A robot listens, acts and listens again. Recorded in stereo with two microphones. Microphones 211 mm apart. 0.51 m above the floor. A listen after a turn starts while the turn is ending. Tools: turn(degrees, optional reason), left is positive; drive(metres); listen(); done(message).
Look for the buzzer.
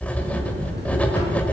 turn(degrees=-55, reason="The buzzer: about 55° right or 125° right.")
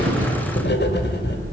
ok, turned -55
turn(degrees=-70, reason="So it is at 70° right.")
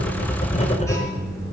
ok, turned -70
turn(degrees=15, reason="The buzzer is now 15° left.")
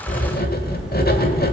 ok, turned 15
done("Facing the buzzer, 2 to 4 m away.")